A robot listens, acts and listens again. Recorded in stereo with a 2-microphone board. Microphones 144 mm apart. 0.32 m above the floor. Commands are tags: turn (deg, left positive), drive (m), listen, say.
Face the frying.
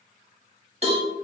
<listen/>
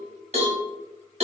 <listen/>
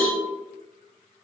<say>I can't make out frying, only a cowbell.</say>